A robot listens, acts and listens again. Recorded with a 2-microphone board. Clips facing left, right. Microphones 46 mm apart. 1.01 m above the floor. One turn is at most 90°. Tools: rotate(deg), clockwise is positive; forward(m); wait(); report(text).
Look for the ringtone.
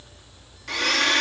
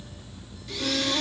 wait()
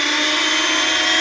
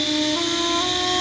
wait()
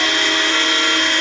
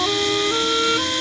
report("I can't make out a ringtone, only a blender.")